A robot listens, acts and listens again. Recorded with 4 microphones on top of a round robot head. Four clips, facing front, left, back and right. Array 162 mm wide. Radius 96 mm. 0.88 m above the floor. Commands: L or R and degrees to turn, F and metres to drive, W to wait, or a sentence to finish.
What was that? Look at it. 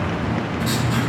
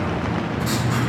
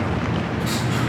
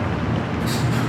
L65
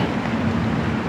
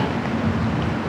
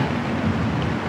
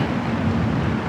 W
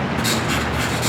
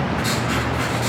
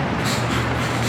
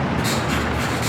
Facing the writing, 1 to 2 m away.